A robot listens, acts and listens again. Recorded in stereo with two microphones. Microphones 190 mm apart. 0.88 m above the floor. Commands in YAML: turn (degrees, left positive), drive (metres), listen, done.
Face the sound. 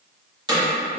turn: -20
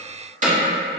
turn: -135
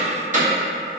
turn: -45
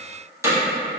turn: -20
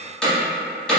done: "Facing the hammering."